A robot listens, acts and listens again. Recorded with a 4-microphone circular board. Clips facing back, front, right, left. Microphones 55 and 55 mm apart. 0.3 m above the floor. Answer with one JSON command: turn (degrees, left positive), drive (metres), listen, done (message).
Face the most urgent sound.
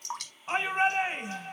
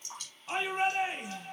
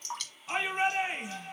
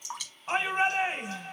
{"turn": 125}
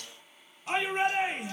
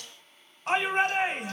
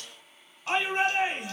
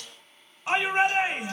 {"turn": 15}
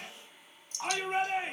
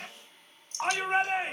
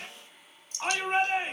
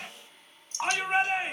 {"done": "Facing the shout, 1 to 2 m away."}